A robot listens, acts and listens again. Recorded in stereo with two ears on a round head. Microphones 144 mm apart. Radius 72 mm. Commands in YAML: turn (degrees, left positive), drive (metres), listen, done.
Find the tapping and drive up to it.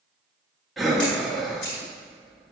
listen: true
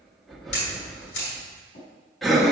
turn: 50
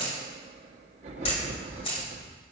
listen: true
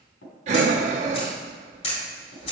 turn: 80
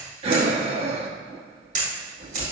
listen: true
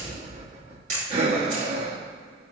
listen: true
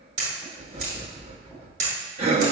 done: "Facing where the tapping came from. I can't hear it now. I did not reach it."